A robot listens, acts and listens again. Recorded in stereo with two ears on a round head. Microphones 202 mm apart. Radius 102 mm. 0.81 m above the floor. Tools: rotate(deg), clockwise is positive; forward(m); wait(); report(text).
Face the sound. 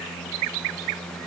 wait()
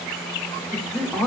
rotate(-30)
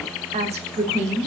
rotate(30)
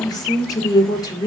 rotate(-15)
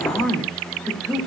report("Found it: a woman speaking, straight ahead, 1 to 2 m away.")